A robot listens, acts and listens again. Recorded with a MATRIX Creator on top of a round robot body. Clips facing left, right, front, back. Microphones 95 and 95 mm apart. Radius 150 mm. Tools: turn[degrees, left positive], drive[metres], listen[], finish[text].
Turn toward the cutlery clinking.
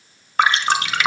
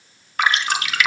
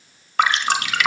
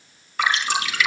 Action: listen[]
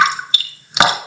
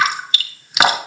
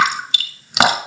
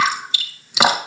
Action: listen[]
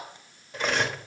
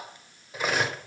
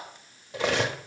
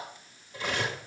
Action: finish[Found it: cutlery clinking, straight ahead, 1 to 2 m away.]